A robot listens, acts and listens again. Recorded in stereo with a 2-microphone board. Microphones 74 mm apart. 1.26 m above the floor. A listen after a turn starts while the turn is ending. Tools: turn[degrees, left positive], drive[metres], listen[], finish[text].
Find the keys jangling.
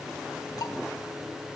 Action: listen[]
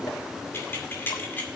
Thought: The keys jangling: about 25° left or 155° left.
Action: turn[25]
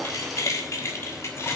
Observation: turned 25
Thought: The keys jangling: about 35° left or 145° left.
Action: turn[35]
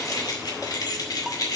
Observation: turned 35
Thought: So it is at 125° left.
Action: turn[125]
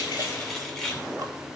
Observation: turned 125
Action: finish[Found it: keys jangling, straight ahead, 2 to 4 m away.]